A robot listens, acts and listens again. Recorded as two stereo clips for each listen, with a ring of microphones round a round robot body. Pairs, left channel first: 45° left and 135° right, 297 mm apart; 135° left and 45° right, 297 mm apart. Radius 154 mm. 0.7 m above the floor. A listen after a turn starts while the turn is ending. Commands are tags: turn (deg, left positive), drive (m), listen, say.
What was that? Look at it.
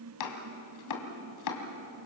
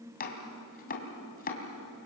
<turn deg="70"/>
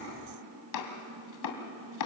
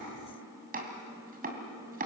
<turn deg="20"/>
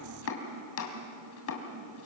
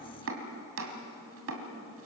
<say>Facing the chopping, 2 to 4 m away.</say>